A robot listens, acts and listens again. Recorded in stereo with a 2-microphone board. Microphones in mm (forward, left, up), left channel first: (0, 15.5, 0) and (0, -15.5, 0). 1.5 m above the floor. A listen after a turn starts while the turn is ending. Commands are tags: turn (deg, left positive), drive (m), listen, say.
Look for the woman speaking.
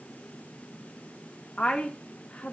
<turn deg="40"/>
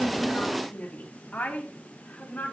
<turn deg="95"/>
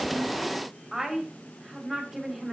<say>Facing the woman speaking.</say>